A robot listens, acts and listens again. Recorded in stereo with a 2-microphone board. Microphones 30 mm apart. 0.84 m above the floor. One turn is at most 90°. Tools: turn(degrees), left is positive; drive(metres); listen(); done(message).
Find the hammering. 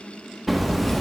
turn(degrees=30)
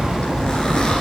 turn(degrees=-30)
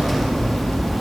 done("Found it: hammering, straight ahead, 1 to 2 m away.")